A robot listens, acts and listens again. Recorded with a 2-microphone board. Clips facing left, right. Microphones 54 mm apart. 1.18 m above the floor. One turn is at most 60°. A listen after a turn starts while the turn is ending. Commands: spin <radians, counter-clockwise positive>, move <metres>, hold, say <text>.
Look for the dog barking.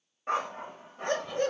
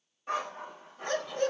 spin 0.61
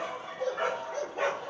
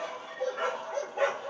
say Found it: a dog barking, straight ahead.